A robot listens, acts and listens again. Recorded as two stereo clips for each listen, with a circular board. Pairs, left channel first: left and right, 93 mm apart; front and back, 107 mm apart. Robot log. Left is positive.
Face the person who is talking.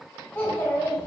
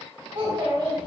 note: The child speaking: 150° left.
cmd yaw +150
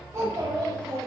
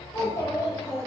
note: The child speaking is now 60° right.
cmd yaw -60
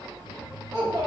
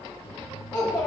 note: The child speaking is now 65° right.
cmd yaw -65
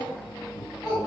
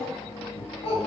end: Found it: a child speaking, straight ahead.